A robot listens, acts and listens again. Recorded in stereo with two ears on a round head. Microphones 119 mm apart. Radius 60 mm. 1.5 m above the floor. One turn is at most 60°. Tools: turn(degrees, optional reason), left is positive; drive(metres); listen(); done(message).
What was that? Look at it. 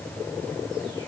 listen()
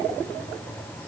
listen()
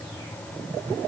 done("I can't make out anything to turn to.")